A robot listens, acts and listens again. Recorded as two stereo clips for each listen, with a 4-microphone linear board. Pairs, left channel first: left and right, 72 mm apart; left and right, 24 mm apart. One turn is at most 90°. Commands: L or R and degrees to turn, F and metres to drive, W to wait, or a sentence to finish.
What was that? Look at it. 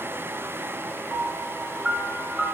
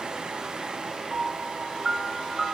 R30
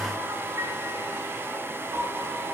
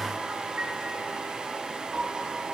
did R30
R90
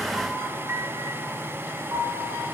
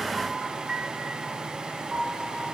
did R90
R45
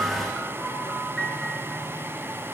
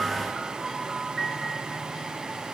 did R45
Facing the piano.